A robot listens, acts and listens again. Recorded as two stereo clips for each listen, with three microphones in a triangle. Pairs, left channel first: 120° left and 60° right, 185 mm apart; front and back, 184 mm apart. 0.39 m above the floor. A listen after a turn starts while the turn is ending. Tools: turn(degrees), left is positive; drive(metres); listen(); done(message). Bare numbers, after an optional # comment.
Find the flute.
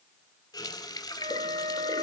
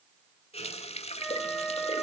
# The flute: 90° right.
turn(-90)
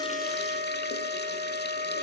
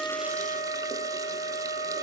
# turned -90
# The flute is now 35° right.
turn(-35)
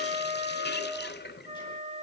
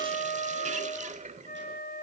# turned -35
# The flute is now 15° right.
turn(-15)
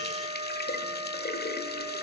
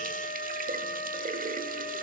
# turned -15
done("Facing the flute, 1 to 2 m away.")